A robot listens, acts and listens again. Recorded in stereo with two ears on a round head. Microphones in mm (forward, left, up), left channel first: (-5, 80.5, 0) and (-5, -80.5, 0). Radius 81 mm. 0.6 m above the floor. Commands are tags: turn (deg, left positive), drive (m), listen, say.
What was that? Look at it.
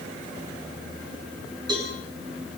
<turn deg="-25"/>
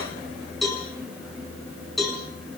<say>Found it: a cowbell, straight ahead, over 4 m away.</say>